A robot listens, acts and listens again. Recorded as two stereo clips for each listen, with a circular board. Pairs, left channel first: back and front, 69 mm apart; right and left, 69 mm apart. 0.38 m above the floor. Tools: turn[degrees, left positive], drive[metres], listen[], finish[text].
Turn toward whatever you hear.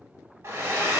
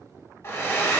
Thought: The hair dryer: 45° right.
Action: turn[-45]
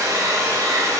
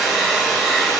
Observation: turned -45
Action: finish[Facing the hair dryer.]